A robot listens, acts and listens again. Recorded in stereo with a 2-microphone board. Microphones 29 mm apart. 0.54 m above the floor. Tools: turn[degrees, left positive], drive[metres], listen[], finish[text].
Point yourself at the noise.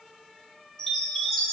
Thought: The chime: about 20° left or 160° left.
Action: turn[20]
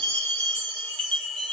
Thought: So it is at 140° left.
Action: turn[140]
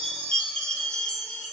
Thought: The chime is now 35° left.
Action: turn[35]
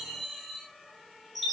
Action: finish[Facing the chime, 1 to 2 m away.]